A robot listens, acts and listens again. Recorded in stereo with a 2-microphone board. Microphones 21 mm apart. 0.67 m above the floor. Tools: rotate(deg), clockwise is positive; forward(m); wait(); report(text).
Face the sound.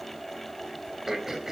rotate(30)
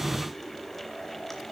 wait()
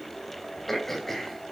rotate(-15)
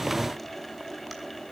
wait()
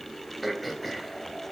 report("Facing the throat clearing.")